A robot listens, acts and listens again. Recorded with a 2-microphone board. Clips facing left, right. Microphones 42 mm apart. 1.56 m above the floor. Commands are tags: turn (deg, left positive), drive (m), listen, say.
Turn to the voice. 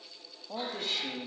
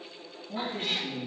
<turn deg="45"/>
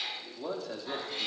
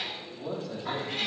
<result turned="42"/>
<turn deg="100"/>
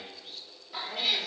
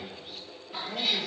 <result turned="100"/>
<say>Found it: a man speaking, straight ahead, 2 to 4 m away.</say>